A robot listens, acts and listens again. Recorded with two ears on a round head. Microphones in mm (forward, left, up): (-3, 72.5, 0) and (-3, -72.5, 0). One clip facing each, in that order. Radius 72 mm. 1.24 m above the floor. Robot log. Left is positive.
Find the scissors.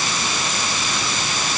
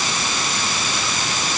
cmd idle
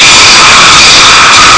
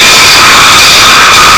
cmd idle
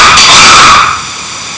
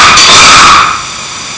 end: I can't make out scissors, only a rattle.